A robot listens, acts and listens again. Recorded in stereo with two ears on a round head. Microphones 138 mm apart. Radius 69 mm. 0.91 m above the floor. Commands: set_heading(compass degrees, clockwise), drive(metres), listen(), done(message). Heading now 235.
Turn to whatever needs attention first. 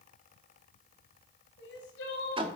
set_heading(145)
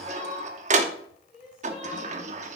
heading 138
done("Facing the crying, 2 to 4 m away.")